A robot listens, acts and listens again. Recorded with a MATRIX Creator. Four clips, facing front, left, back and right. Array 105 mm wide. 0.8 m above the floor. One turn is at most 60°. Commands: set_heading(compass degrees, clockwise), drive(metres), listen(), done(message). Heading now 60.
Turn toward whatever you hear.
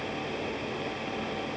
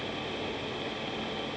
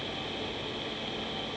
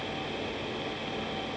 listen()
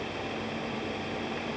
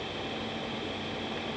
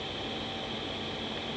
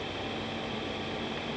listen()
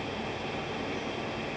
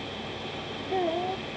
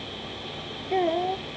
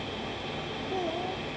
set_heading(0)
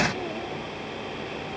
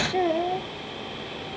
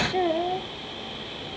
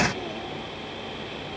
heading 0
set_heading(300)
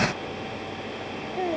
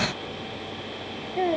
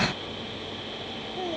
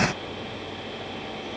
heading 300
set_heading(240)
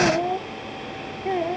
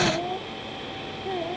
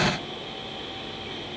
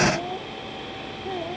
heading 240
done("Found it: a child speaking, straight ahead.")